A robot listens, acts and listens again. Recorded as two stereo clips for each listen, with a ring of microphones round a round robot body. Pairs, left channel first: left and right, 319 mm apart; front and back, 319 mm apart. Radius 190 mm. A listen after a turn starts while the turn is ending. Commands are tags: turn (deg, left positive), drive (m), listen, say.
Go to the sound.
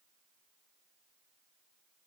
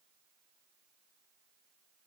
<listen/>
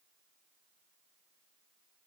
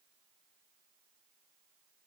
<listen/>
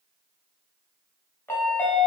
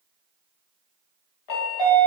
<drive m="1.0"/>
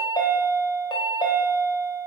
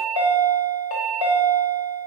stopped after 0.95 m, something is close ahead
<turn deg="10"/>
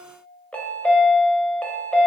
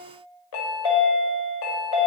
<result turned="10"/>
<say>Arrived at the chime, straight ahead.</say>